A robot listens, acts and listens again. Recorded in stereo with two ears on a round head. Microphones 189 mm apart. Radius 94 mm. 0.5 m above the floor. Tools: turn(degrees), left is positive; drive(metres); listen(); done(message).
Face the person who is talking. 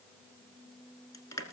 listen()
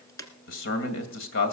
turn(degrees=60)
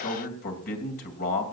turn(degrees=50)
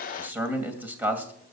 turn(degrees=-10)
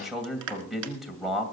done("Facing the man speaking.")